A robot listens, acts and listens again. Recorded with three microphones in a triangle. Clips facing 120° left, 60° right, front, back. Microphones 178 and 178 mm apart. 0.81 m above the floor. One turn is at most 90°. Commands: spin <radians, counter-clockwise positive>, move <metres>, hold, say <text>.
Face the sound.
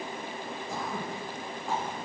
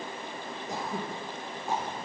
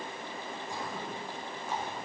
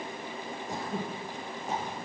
spin -1.57
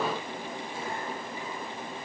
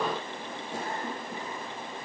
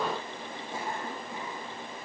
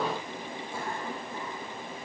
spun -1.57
spin -1.22
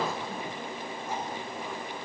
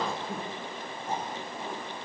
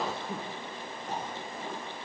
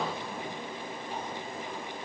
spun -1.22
say Found it: throat clearing, straight ahead.